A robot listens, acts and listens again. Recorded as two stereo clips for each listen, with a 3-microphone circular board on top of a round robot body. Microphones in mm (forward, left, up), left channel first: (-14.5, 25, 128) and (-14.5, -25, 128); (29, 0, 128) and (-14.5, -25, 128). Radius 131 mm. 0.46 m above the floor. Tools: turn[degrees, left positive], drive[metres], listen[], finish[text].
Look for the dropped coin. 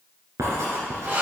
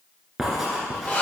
Action: listen[]
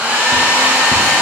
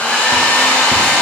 Action: listen[]
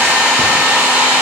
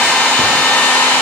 Action: finish[I can't make out a dropped coin, only a hair dryer and writing.]